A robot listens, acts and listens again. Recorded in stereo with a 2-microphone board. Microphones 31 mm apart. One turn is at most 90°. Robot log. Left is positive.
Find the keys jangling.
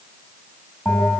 cmd idle
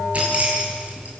note: The keys jangling: about 45° right or 135° right.
cmd yaw -45
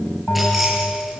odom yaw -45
cmd idle
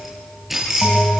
end: Facing the keys jangling, over 4 m away.